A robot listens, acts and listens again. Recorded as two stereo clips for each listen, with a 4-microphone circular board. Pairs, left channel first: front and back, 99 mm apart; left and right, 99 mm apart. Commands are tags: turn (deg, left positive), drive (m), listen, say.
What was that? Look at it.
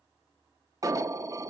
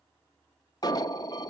<turn deg="130"/>
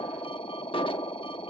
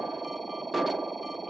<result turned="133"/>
<say>Facing the alarm.</say>